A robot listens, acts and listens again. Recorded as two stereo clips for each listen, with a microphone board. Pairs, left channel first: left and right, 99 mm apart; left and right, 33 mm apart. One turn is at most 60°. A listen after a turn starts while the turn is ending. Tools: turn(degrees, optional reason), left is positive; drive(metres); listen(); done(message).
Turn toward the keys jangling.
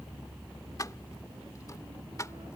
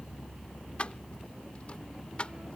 turn(degrees=35, reason="The keys jangling: about 35° left or 145° left.")
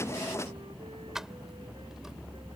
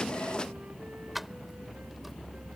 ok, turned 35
done("Found it: keys jangling, straight ahead.")